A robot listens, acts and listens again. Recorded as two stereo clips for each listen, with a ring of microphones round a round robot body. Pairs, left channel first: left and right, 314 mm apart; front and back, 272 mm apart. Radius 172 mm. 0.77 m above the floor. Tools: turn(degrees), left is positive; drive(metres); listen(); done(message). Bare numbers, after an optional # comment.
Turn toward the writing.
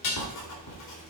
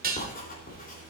# The writing: 60° left.
turn(60)
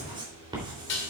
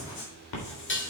# The writing is now 15° right.
turn(-15)
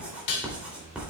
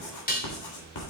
done("Facing the writing, 2 to 4 m away.")